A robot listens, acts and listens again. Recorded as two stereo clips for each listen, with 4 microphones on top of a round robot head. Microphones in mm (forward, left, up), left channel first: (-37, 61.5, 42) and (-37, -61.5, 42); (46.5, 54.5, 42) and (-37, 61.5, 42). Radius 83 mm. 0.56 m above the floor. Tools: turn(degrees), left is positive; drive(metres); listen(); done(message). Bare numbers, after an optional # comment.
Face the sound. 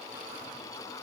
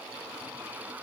listen()
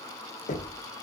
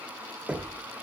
# The knocking: 100° left.
turn(100)
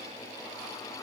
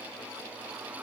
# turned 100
listen()
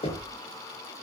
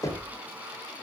# The knocking is now 45° left.
turn(45)
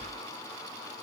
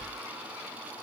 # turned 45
# The knocking is now 15° left.
turn(15)
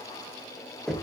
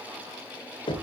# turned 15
done("Found it: knocking, straight ahead, 1 to 2 m away.")